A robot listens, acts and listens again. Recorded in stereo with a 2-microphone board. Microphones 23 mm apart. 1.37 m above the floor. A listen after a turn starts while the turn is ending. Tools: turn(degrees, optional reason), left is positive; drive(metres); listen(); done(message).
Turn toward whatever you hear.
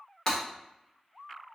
turn(degrees=30, reason="The breaking glass: about 30° left or 150° left.")
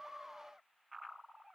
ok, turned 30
listen()
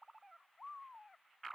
done("I heard breaking glass, but can't make it out now. It was about straight ahead or 120° left.")